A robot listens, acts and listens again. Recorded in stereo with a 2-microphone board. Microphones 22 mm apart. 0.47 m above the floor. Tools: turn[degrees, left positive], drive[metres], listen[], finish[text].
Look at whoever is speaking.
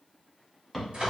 Action: listen[]
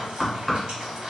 Action: listen[]
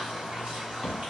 Action: finish[I can't make out anyone speaking, only knocking and frying.]